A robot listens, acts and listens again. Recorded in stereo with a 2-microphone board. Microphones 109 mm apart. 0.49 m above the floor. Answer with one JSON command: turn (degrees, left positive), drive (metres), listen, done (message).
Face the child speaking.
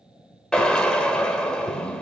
{"listen": true}
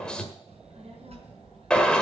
{"turn": -70}
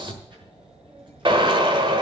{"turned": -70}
{"turn": -45}
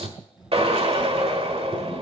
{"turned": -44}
{"done": "Facing the child speaking."}